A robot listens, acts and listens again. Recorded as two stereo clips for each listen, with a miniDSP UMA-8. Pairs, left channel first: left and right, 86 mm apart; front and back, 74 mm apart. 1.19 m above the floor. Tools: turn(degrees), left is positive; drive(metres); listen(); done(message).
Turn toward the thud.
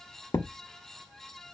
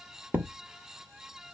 turn(degrees=115)
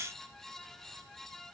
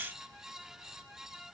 done("Facing where the thud came from. I can't hear it now.")